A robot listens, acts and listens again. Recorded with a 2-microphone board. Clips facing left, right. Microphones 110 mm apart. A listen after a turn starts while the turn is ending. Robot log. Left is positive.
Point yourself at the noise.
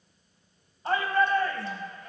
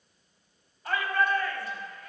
note: The shout: about 30° left or 150° left.
cmd yaw +30
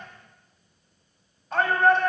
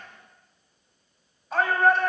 end: Facing the shout, 2 to 4 m away.